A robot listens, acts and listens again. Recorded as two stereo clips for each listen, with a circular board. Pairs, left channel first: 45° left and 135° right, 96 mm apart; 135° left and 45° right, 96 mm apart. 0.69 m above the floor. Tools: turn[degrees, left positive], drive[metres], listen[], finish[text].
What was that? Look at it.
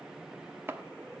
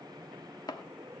Thought: The chopping: 165° left.
Action: turn[165]
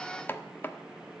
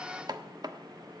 Thought: The chopping is now 15° right.
Action: turn[-15]
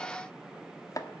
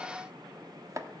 Action: finish[Facing the chopping, 1 to 2 m away.]